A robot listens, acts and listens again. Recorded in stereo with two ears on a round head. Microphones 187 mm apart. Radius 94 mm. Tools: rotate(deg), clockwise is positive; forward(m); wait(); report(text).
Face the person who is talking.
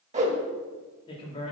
rotate(-30)
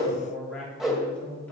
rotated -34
rotate(-10)
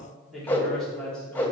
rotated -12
report("Found it: a man speaking, straight ahead, 2 to 4 m away.")